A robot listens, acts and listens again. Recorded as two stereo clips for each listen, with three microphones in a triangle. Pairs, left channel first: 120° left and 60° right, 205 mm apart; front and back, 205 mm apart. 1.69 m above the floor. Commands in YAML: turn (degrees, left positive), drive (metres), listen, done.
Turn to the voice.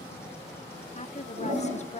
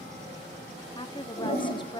turn: 70
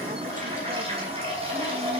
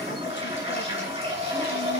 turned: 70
listen: true
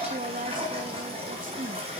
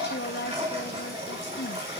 turn: -15
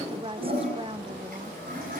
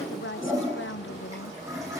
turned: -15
done: "Facing the woman speaking, under 1 m away."